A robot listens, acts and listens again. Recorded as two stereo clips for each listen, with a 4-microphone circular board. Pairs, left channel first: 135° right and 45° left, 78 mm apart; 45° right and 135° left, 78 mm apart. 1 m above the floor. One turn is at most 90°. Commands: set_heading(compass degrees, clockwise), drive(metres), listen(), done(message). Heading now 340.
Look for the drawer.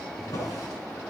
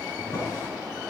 set_heading(70)
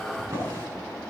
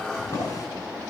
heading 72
done("Facing the drawer.")